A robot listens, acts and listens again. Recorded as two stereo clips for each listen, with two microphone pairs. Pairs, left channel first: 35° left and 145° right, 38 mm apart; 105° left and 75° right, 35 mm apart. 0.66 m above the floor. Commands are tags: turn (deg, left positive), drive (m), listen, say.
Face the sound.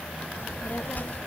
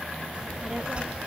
<turn deg="-10"/>
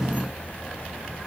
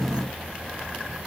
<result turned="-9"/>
<turn deg="-15"/>
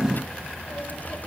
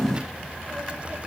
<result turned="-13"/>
<turn deg="-15"/>
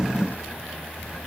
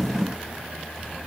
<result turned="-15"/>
<turn deg="-10"/>
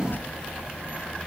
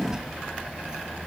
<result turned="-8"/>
<say>Facing the child speaking.</say>